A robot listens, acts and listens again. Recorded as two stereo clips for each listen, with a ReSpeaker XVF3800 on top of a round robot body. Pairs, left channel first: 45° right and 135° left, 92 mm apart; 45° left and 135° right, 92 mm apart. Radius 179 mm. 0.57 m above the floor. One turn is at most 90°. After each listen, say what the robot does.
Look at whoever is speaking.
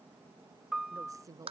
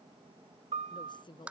Turn 80° left.
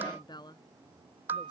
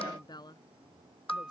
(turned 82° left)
Found it: a woman speaking, straight ahead.